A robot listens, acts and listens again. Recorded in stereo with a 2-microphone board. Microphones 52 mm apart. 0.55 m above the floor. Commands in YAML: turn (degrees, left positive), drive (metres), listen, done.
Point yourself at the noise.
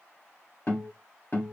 turn: 40
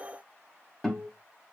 done: "Facing the guitar."